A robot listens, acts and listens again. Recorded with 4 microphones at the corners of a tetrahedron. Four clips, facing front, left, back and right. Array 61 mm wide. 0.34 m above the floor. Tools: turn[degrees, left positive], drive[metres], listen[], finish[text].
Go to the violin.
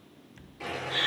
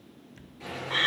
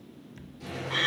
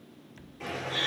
Action: listen[]
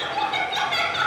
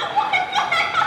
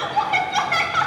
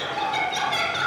Action: listen[]
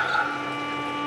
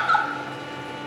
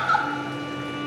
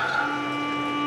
Thought: The violin: 80° right.
Action: turn[-80]
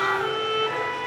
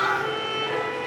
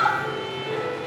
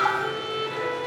Thought: The violin is now 15° left.
Action: turn[15]
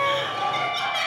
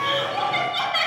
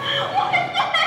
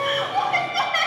Action: drive[1.0]
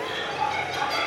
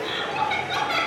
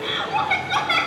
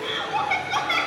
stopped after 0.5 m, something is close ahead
Action: listen[]
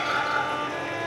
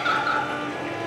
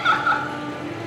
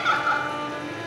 Action: finish[Blocked. The violin is further on, straight ahead.]